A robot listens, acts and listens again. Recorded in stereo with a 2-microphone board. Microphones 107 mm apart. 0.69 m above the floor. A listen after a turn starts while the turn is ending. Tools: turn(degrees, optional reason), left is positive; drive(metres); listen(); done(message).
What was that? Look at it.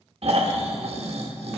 turn(degrees=-65, reason="The snoring: about 65° right or 115° right.")
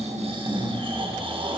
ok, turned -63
turn(degrees=-50, reason="So it is at 50° right.")
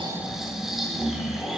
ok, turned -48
done("Facing the snoring.")